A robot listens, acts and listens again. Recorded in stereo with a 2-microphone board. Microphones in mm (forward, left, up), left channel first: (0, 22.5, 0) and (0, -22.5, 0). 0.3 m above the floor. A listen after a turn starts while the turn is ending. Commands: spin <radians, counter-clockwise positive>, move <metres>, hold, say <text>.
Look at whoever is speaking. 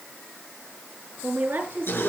spin -0.87
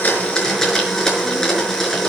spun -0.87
hold
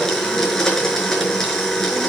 hold
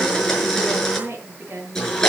spin -1.31
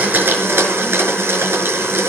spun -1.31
hold
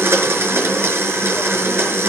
hold
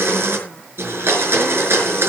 say Facing where the woman speaking came from. I can't hear it now.